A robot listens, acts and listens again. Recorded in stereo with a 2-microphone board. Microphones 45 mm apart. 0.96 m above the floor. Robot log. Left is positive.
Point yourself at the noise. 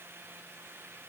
cmd idle
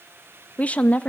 note: The woman speaking: about 30° left or 150° left.
cmd yaw +30
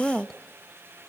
end: Facing the woman speaking.